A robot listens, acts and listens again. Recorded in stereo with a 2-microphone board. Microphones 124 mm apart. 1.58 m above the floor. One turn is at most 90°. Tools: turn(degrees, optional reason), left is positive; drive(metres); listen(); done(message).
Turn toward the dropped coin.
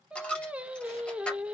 turn(degrees=30)
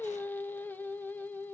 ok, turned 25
listen()
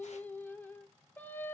done("I heard a dropped coin, but can't make it out now. It was about 15° right or 145° left.")